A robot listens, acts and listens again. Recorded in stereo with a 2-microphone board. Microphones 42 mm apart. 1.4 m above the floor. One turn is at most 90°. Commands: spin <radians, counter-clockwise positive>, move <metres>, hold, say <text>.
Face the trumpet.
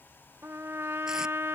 spin -1.57
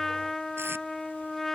spin 0.17
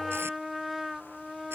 say Found it: a trumpet, straight ahead.